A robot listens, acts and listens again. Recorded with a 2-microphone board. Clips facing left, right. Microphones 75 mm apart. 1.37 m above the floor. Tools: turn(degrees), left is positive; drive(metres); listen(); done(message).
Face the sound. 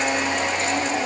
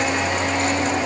listen()
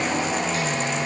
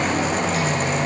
listen()
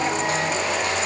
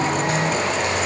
done("I can't make out anything to turn to.")